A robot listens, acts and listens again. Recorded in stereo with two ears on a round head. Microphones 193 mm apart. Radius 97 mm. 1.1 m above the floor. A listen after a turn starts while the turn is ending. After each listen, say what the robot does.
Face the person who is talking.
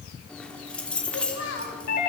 Turn 65° left.
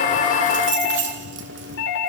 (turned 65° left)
Keep listening.
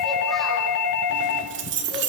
Keep listening.
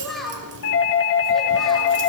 Facing the child speaking, over 4 m away.